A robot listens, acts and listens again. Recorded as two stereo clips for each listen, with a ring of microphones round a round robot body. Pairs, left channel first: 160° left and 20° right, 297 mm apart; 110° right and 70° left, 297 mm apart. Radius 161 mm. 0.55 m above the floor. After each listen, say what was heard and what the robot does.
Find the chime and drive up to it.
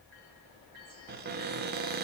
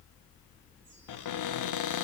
Keep listening.
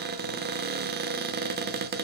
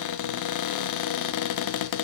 Keep listening.
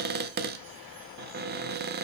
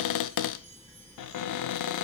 I can't make out a chime, only a cupboard door.